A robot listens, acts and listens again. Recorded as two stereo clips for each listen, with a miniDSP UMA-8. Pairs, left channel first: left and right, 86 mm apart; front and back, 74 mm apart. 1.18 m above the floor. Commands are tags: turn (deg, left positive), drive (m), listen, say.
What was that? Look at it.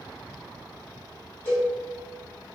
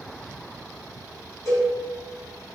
<turn deg="25"/>
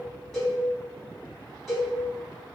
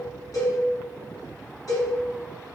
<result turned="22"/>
<say>Facing the cowbell.</say>